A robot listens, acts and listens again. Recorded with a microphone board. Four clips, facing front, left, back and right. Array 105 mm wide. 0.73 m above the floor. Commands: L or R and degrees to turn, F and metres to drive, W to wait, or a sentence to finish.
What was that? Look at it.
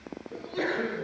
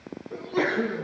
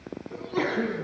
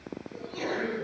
L135
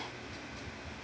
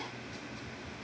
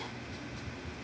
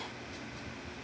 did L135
Facing where the sneeze came from. I can't hear it now.